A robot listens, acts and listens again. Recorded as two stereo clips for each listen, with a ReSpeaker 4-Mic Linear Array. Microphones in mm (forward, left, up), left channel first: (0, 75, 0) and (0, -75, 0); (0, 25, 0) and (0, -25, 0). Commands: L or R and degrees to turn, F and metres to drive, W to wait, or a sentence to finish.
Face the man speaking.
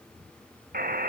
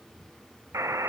W
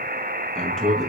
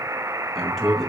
L30
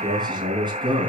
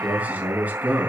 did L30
R35
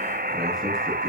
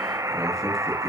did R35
W
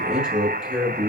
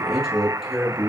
Found it: a man speaking, straight ahead.